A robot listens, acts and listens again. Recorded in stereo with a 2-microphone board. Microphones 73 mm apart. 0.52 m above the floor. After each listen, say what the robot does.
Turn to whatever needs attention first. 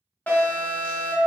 Turn 20° left.
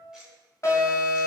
Turn 135° left.
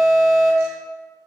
Facing the alarm.